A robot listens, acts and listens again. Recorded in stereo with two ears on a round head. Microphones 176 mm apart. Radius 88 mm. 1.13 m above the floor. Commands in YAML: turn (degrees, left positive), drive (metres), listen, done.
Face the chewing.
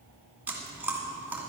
turn: -30
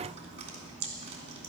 turn: -140
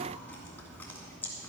turn: 10
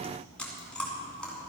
done: "Facing the chewing."